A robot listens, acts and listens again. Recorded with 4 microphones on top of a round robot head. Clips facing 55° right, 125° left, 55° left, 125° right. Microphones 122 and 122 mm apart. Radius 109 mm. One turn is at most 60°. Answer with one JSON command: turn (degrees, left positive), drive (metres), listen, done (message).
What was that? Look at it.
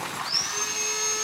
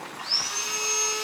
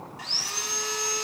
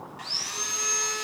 {"turn": -60}
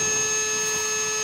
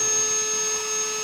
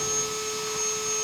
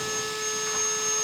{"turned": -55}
{"turn": -60}
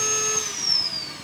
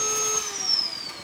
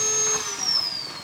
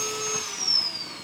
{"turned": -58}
{"turn": -50}
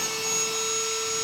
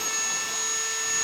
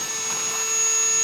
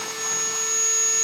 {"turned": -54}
{"done": "Facing the sawing."}